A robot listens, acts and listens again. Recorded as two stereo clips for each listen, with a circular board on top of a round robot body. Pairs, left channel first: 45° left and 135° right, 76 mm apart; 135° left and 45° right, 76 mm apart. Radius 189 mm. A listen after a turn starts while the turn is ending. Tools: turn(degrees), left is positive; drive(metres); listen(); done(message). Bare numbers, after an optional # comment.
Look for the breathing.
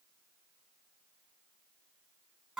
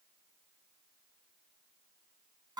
listen()
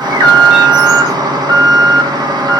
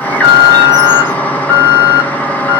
listen()
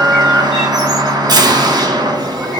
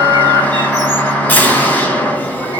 done("I can't make out breathing to turn to.")